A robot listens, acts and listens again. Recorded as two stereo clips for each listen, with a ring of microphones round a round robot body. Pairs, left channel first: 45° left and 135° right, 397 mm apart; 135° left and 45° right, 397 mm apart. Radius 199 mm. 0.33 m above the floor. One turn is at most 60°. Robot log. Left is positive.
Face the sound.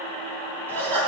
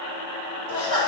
note: The laughter: 130° left.
cmd yaw +60
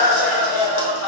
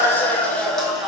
note: The laughter is now 45° left.
cmd yaw +45
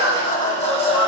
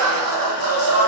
note: The laughter is now 30° right.
cmd yaw -30
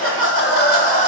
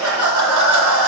note: The laughter is now 20° right.
cmd yaw -20
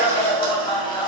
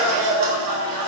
note: The laughter is now 30° right.
cmd yaw -30
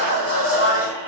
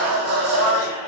end: Found it: laughter, straight ahead.